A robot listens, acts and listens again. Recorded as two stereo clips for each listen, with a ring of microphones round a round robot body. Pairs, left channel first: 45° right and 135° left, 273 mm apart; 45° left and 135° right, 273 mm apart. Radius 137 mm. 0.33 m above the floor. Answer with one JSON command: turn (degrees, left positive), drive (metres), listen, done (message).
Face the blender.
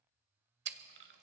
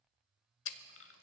{"listen": true}
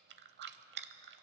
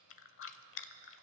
{"listen": true}
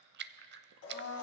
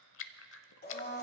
{"turn": -10}
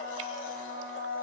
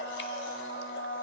{"done": "Found it: a blender, straight ahead."}